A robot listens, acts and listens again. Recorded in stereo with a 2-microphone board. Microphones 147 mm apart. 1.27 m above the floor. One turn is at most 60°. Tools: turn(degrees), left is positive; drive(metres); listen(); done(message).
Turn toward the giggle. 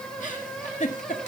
turn(degrees=60)
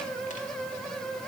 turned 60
listen()
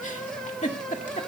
turn(degrees=60)
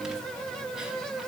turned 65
listen()
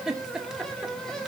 done("Found it: a giggle, straight ahead, 1 to 2 m away.")